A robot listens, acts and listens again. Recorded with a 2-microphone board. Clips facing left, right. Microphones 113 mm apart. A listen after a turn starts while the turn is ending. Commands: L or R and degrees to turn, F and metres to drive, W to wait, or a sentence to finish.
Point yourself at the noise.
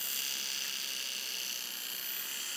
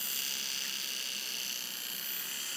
W
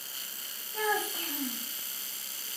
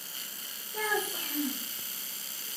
R15
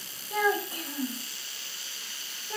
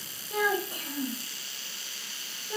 Found it: a child speaking, straight ahead, under 1 m away.